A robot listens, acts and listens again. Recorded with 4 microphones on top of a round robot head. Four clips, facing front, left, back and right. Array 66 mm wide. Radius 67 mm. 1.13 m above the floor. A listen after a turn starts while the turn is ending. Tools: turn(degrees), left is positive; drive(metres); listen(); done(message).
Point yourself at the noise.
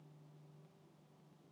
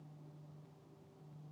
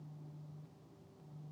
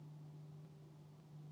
listen()
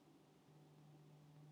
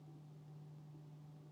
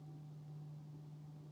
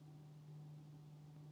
listen()
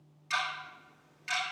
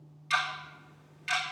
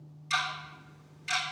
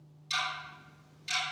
turn(degrees=60)
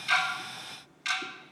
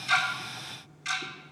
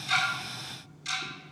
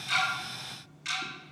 done("Found it: ticking, straight ahead, 2 to 4 m away.")